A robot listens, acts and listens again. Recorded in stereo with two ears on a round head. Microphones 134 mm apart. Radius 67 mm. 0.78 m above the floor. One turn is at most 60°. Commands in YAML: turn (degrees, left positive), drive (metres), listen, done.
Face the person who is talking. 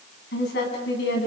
turn: 60
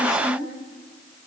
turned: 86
done: "Found it: a woman speaking, straight ahead."